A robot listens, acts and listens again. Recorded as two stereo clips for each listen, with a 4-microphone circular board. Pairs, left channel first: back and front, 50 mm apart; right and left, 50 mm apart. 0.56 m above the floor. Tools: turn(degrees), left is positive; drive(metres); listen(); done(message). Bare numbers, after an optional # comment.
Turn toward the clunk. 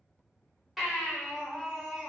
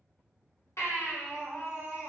listen()
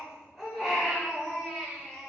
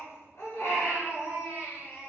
listen()
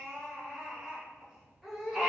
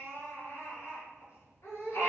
done("I can't make out a clunk, only a baby crying.")